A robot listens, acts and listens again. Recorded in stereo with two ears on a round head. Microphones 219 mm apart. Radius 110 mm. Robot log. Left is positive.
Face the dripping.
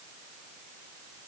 cmd idle
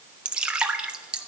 cmd yaw -30
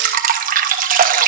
note: So it is at 145° right.
cmd yaw -145
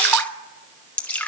end: Found it: dripping, straight ahead.